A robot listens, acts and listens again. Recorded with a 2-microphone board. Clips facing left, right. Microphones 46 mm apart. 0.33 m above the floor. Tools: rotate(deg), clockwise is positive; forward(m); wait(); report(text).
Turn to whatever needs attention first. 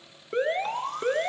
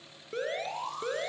rotate(-35)
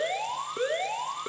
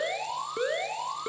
report("Facing the alarm, 2 to 4 m away.")